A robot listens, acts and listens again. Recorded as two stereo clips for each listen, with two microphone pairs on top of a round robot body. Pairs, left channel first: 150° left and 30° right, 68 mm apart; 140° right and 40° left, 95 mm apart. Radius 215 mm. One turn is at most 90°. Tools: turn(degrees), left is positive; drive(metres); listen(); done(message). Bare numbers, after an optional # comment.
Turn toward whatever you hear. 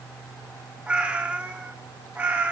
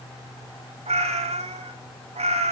# The cat meowing: 35° left.
turn(35)
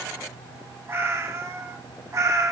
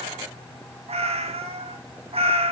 # The cat meowing is now 15° left.
turn(15)
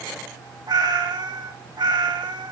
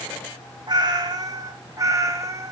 # The cat meowing is now 20° right.
turn(-20)
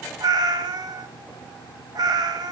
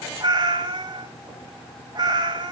done("Found it: a cat meowing, straight ahead, 2 to 4 m away.")